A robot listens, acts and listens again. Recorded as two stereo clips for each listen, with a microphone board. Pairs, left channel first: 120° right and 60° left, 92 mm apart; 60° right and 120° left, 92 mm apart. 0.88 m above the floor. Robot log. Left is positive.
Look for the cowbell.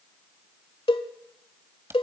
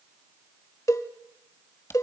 note: The cowbell: 115° right.
cmd yaw -115
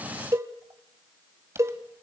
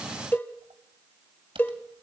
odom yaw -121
end: Facing the cowbell, 1 to 2 m away.